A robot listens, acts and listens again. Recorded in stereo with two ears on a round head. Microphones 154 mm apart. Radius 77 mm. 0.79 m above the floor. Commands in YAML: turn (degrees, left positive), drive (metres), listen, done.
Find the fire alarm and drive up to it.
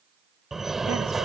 turn: 30
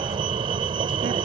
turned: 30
turn: -30
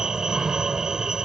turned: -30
drive: 1.0
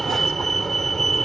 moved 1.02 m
drive: 1.0
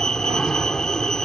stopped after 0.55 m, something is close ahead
done: "Blocked. The fire alarm is further on, straight ahead."